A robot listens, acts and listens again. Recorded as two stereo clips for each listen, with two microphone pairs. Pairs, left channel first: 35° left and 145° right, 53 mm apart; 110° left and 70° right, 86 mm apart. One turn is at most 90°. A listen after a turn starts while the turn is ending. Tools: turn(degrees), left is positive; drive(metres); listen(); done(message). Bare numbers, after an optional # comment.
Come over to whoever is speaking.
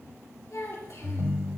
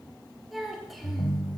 # The child speaking: 20° left.
turn(20)
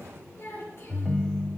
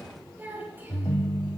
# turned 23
drive(1.0)
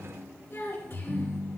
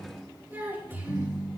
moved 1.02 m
drive(1.0)
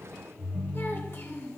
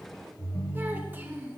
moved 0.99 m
drive(1.0)
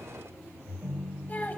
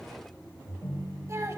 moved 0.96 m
# The child speaking is now 15° right.
turn(-15)
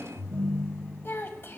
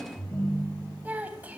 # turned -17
drive(1.0)
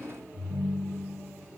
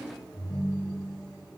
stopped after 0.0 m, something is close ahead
listen()
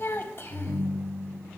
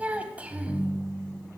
done("Arrived at the child speaking, straight ahead.")